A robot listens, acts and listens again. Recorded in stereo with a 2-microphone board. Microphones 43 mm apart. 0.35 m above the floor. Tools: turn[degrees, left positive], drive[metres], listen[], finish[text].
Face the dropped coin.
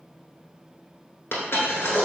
Thought: The dropped coin: about 65° left or 115° left.
Action: turn[65]
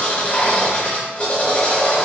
Action: listen[]
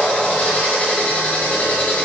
Action: finish[I heard a dropped coin, but can't make it out now. It was about straight ahead or 50° left.]